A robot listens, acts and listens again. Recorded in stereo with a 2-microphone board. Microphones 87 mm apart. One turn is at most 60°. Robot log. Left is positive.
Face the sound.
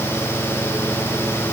cmd idle
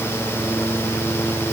cmd idle
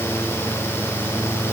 end: I can't make out anything.